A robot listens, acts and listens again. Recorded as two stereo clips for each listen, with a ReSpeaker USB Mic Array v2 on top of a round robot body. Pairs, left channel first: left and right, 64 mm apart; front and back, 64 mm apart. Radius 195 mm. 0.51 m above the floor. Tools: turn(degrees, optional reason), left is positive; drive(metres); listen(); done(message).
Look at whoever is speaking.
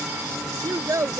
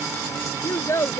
turn(degrees=-50, reason="The child speaking: 50° right.")
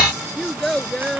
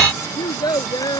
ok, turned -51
done("Found it: a child speaking, straight ahead.")